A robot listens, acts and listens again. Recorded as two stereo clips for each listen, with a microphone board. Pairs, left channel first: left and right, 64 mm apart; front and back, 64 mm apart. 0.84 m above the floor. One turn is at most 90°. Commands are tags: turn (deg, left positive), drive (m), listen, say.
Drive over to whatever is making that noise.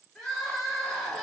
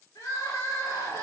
<drive m="1.0"/>
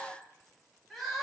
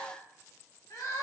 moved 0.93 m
<drive m="1.0"/>
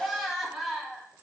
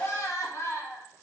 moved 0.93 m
<drive m="1.0"/>
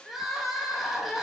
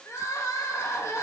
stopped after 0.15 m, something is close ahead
<say>I am next to the crying.</say>